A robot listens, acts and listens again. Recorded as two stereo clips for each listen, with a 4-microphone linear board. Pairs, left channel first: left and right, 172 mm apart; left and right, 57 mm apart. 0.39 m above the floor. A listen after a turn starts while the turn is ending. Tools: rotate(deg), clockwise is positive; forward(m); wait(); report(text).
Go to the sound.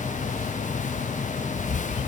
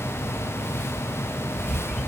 rotate(30)
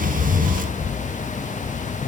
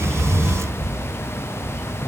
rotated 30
rotate(-30)
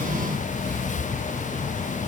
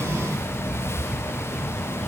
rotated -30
rotate(-10)
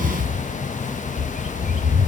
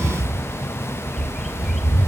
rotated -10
forward(1.0)
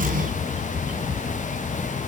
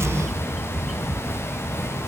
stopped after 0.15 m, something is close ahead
report("Blocked. The bird is further on, straight ahead.")